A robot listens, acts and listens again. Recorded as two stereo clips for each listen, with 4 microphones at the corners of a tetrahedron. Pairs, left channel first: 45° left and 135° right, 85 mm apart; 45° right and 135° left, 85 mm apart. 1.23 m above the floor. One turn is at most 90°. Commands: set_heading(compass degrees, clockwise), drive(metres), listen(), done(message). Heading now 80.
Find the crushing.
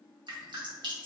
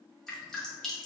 listen()
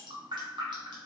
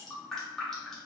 listen()
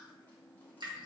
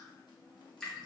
done("I can't make out crushing, only dripping.")